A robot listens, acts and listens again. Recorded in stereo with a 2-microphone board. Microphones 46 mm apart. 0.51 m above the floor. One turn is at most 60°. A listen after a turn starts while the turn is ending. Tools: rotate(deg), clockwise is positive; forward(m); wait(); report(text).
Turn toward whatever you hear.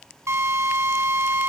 rotate(60)
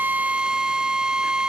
rotate(15)
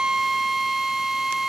report("Found it: a drill, straight ahead, 2 to 4 m away.")